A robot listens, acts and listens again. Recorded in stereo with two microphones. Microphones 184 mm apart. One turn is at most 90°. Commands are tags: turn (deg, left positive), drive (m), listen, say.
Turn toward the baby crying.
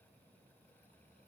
<listen/>
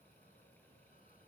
<listen/>
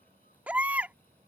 <turn deg="-30"/>
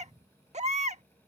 <turn deg="-90"/>
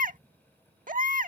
<turn deg="-50"/>
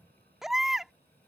<say>Found it: a baby crying, straight ahead.</say>